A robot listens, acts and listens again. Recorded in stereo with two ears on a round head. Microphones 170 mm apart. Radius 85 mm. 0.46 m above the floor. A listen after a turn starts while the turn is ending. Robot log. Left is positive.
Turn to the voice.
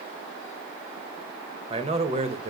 note: The man speaking: about 35° right or 145° right.
cmd yaw -35
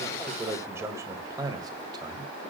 note: So it is at 25° right.
cmd yaw -25
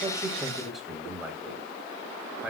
end: Found it: a man speaking, straight ahead, 2 to 4 m away.